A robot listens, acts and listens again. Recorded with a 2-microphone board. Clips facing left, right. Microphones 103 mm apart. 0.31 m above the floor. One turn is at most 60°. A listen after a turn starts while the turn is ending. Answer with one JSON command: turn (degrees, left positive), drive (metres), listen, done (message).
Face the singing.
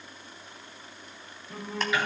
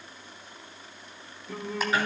{"turn": -60}
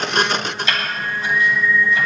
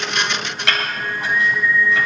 {"turn": -20}
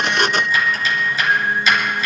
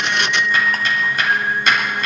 {"done": "Found it: singing, straight ahead, 2 to 4 m away."}